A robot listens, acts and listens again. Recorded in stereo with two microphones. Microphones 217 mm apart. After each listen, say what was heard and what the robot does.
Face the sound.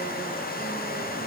Keep listening.
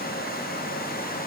Keep listening.
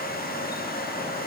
I can't make out anything.